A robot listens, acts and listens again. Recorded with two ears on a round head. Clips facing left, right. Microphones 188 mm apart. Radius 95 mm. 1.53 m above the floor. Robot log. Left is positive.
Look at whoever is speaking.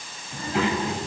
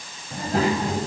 note: The child speaking: about 35° right or 145° right.
cmd yaw -35
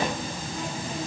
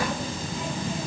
note: So it is at 110° right.
cmd yaw -110
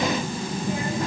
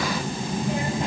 note: The child speaking is now 20° right.
cmd yaw -20
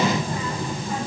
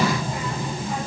end: Facing the child speaking.